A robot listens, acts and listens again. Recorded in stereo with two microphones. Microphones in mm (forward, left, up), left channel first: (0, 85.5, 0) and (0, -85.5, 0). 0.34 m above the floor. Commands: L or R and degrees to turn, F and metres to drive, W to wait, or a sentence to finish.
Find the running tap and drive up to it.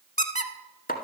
W
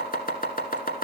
W
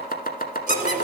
R50
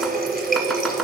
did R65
R65
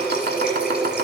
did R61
F1.0
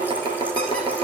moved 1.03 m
R10
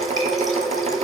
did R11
F1.0
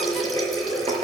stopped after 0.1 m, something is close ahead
Blocked. The running tap is further on, straight ahead.